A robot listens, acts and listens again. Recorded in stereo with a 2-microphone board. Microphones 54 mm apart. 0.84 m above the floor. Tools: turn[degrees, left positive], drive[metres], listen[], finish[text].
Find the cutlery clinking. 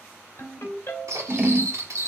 Action: turn[-90]
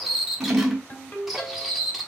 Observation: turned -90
Action: finish[Facing the cutlery clinking, 1 to 2 m away.]